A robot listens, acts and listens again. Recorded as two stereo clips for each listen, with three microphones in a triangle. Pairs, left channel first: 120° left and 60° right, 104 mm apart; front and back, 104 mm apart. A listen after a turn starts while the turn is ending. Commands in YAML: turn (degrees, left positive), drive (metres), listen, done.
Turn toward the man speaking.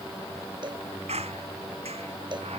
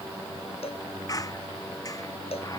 listen: true
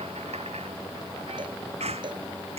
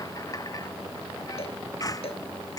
listen: true
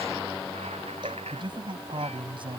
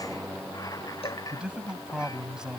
turn: -95
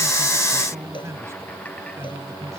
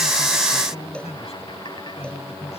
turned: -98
done: "Facing the man speaking."